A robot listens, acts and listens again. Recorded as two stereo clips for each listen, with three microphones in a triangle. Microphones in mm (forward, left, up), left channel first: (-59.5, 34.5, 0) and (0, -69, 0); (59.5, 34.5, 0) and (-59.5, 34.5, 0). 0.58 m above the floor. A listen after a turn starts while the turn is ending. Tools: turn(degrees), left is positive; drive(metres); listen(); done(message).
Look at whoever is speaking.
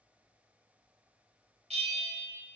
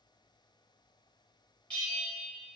listen()
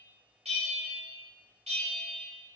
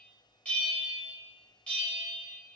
listen()
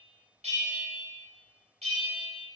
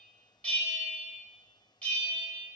done("I can't make out anyone speaking to turn to.")